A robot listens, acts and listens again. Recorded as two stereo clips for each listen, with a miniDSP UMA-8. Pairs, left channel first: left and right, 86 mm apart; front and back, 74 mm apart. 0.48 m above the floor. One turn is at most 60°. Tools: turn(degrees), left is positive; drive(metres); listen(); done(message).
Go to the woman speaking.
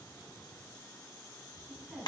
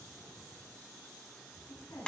drive(metres=1.0)
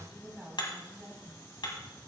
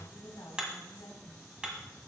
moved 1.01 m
turn(degrees=-10)
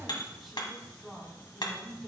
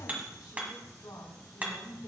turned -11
drive(metres=1.0)
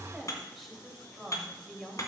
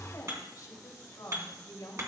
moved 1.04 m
drive(metres=1.0)
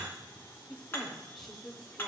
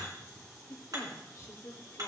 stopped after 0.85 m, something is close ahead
done("Arrived at the woman speaking, straight ahead.")